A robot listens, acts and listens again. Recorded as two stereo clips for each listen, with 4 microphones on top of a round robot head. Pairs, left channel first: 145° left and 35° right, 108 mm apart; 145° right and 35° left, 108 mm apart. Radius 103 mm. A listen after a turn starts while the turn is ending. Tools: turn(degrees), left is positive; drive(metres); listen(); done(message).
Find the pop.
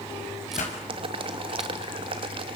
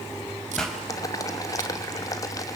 turn(degrees=130)
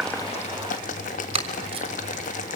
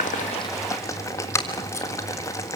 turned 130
done("I heard a pop from this way, but can't make it out now.")